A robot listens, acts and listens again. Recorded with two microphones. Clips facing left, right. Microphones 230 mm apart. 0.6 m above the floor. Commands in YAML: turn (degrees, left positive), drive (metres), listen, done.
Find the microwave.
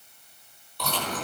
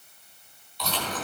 listen: true
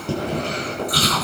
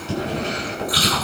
listen: true
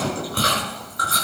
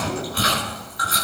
done: "I can't make out a microwave to turn to."